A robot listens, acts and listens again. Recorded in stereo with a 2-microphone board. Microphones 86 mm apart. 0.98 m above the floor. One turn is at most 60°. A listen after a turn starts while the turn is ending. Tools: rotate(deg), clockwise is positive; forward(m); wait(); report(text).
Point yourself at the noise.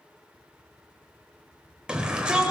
rotate(30)
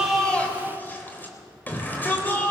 rotate(-20)
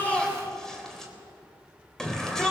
report("Found it: a shout, straight ahead.")